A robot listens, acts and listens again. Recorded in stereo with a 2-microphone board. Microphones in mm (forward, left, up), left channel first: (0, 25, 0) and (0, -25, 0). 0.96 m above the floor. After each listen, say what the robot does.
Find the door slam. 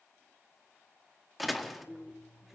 Turn 30° left.
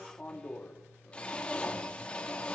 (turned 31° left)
Keep listening.
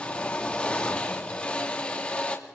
I heard a door slam, but can't make it out now. It was about 30° right or 150° left.